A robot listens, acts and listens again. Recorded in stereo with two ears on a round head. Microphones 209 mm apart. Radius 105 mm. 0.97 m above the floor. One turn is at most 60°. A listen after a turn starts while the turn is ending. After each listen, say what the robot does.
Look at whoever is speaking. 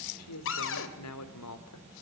Turn 60° left.
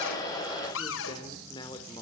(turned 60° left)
Turn 20° left.
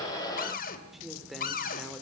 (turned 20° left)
Facing the man speaking.